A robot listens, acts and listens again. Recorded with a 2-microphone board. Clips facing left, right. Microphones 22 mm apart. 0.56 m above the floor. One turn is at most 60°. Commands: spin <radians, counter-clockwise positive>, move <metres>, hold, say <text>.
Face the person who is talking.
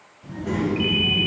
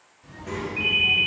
spin 0.70
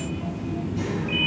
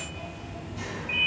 spin 0.52
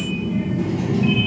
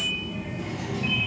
spin 0.52
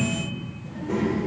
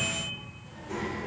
spin 0.35
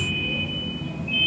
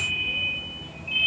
spin 0.17
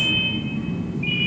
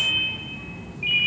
say Found it: a child speaking, straight ahead, 1 to 2 m away.